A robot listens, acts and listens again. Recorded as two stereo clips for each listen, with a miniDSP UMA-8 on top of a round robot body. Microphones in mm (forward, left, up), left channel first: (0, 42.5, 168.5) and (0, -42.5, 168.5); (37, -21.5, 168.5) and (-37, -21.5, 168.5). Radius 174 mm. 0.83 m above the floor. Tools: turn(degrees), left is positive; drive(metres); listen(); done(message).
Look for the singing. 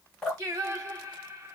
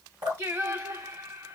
turn(degrees=-145)
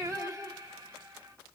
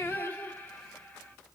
turn(degrees=-60)
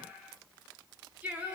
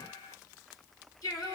turn(degrees=-20)
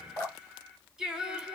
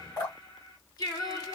done("Found it: singing, straight ahead, 1 to 2 m away.")